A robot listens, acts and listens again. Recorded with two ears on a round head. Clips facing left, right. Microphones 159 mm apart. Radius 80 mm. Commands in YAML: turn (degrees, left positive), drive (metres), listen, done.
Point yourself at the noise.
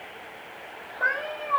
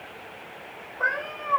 turn: -75
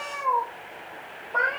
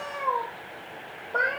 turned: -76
turn: -20
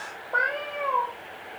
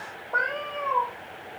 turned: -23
turn: 15
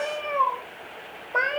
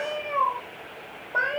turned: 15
turn: 20
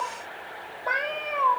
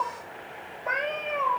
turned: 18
done: "Found it: a cat meowing, straight ahead."